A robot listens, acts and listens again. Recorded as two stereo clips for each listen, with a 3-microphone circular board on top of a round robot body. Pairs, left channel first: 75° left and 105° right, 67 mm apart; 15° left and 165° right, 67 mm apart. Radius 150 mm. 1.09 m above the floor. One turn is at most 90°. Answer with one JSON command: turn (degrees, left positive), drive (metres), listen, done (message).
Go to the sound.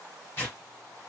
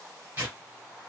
{"turn": 90}
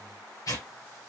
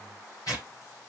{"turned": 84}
{"turn": 50}
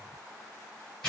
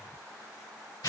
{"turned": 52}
{"drive": 1.0}
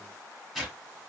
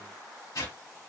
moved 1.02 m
{"turn": -10}
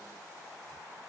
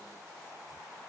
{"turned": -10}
{"listen": true}
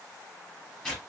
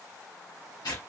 {"drive": 1.0}
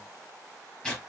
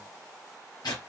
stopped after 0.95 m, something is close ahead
{"done": "I am next to the tearing paper."}